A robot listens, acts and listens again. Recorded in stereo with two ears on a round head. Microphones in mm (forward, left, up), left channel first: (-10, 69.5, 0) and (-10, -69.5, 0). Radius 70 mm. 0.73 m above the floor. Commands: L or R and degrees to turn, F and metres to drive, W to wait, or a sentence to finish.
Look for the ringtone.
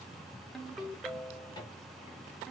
L30
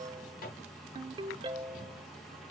R30
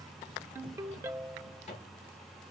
R15
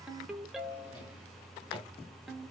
Found it: a ringtone, straight ahead, under 1 m away.